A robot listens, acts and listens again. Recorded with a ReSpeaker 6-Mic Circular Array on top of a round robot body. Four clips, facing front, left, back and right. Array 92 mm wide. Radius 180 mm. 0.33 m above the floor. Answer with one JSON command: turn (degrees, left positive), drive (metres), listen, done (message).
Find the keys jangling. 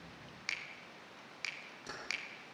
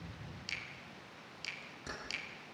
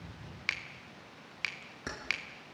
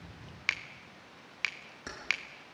{"turn": -155}
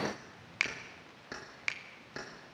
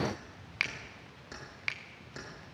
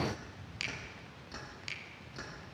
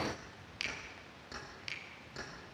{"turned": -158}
{"turn": 10}
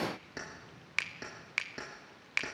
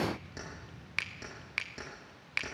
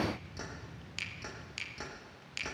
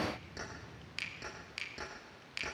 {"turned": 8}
{"done": "Found it: keys jangling, straight ahead, over 4 m away."}